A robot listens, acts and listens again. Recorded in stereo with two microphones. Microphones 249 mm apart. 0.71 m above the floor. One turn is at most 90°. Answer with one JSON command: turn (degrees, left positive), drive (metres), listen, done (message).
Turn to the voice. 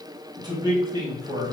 {"turn": -30}
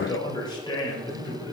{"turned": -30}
{"turn": 20}
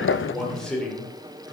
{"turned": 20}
{"done": "Facing the man speaking, 1 to 2 m away."}